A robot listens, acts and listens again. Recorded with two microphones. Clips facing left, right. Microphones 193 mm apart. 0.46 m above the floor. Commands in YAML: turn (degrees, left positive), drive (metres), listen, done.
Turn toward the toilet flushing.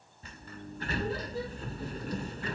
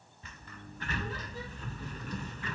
listen: true
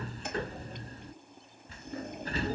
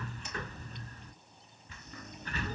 turn: 60
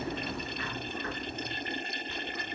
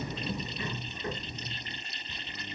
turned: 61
turn: 55
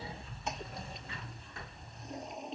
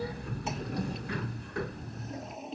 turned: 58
done: "Facing the toilet flushing."